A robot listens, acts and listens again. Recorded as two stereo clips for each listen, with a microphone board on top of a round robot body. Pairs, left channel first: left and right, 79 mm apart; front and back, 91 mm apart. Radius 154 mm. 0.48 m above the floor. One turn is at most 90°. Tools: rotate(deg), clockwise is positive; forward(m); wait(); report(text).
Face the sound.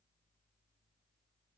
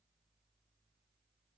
wait()
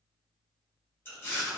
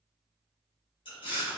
rotate(-30)
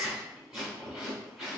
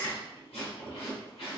report("Found it: chewing, straight ahead, 1 to 2 m away.")